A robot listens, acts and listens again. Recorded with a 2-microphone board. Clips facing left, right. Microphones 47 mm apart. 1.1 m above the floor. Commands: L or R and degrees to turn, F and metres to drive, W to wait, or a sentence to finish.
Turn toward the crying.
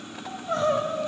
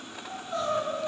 L60
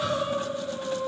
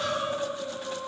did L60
Found it: crying, straight ahead, 1 to 2 m away.